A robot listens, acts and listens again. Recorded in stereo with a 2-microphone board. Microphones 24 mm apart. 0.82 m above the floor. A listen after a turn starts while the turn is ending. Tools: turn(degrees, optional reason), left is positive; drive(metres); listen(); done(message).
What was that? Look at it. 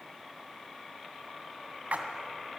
turn(degrees=-60, reason="The splash: about 60° right or 120° right.")
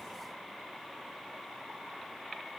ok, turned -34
listen()
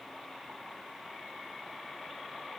done("I heard a splash, but can't make it out now. It was about 25° right or 85° right.")